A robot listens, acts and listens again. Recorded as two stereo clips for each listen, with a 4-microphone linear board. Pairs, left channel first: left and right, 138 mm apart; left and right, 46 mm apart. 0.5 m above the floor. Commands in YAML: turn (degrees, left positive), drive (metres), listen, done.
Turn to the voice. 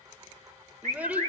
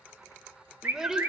turn: -30
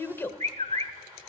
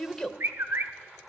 turn: 20
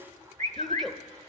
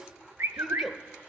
done: "Found it: a child speaking, straight ahead."